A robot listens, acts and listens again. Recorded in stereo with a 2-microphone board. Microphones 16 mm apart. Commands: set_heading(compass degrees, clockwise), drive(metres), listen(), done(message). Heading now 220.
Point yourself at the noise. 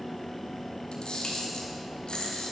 set_heading(130)
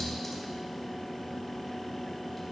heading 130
listen()
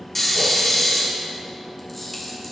set_heading(115)
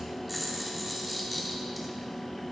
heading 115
done("Facing the camera shutter.")